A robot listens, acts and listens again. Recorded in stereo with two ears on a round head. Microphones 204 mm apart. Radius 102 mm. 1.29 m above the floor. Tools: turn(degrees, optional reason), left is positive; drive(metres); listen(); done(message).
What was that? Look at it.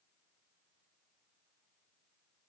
listen()
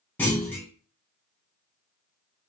turn(degrees=30)
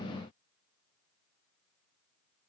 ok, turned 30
listen()
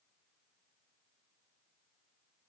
done("I heard a clunk, but can't make it out now. It was about 20° right or 140° left.")